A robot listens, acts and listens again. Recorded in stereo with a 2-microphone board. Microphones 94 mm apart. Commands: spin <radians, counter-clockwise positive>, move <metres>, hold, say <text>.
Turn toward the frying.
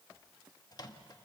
hold
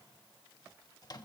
hold
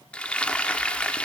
spin 0.52
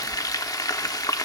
spin 2.36
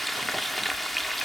say Found it: frying, straight ahead, under 1 m away.